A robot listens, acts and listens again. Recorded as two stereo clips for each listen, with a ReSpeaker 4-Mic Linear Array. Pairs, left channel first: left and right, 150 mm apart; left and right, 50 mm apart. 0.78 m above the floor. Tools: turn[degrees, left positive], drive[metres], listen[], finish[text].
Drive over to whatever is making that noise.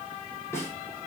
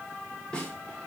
Thought: The snare drum: about 20° left or 160° left.
Action: turn[20]
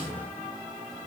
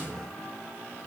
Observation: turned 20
Action: listen[]
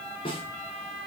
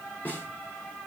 Thought: So it is at 140° left.
Action: turn[140]
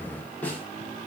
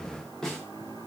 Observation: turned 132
Thought: The snare drum is now 10° left.
Action: turn[10]
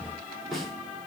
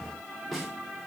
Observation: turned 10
Action: drive[1.0]
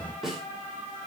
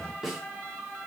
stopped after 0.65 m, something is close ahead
Action: finish[Something is in my way. I am facing the snare drum but have not reached it.]